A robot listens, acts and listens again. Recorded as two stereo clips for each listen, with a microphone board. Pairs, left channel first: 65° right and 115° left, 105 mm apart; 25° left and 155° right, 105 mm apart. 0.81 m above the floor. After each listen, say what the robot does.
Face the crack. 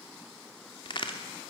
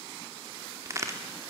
Turn 100° right.
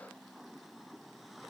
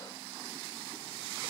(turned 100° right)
Facing where the crack came from. I can't hear it now.